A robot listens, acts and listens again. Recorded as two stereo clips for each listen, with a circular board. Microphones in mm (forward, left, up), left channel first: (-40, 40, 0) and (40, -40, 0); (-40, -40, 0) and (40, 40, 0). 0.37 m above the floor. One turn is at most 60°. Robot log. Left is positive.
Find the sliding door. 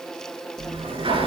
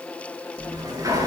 note: The sliding door: 10° right.
cmd yaw -10
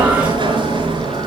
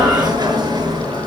end: Facing the sliding door, over 4 m away.